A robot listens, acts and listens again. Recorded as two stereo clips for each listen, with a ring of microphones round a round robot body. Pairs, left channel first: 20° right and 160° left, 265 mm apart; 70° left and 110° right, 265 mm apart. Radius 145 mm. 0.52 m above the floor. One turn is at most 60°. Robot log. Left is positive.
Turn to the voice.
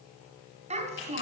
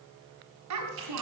note: The child speaking: 135° right.
cmd yaw -60
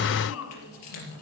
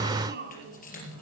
note: The child speaking is now 60° right.
cmd yaw -60
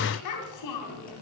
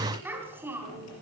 note: The child speaking is now 30° right.
cmd yaw -30
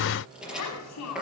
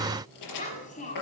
end: Facing the child speaking, 2 to 4 m away.